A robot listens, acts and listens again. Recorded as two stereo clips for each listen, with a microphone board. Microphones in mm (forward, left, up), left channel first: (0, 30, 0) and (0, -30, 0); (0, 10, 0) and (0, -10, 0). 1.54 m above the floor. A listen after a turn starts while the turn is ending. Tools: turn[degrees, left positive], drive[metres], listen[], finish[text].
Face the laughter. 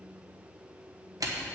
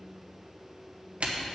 Action: listen[]
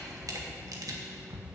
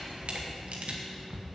Action: listen[]
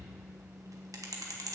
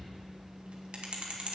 Action: finish[I can't make out laughter, only a camera shutter.]